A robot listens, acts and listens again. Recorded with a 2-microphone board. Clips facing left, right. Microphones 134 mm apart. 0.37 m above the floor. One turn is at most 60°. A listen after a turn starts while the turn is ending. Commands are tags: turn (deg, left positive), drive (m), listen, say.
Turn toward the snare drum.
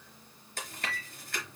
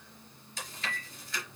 <listen/>
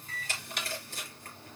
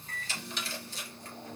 <turn deg="60"/>
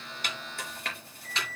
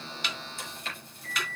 <listen/>
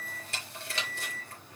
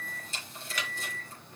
<listen/>
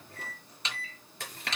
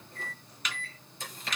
<turn deg="30"/>
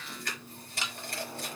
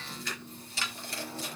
<turn deg="20"/>
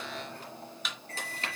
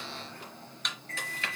<say>Found it: a snare drum, straight ahead.</say>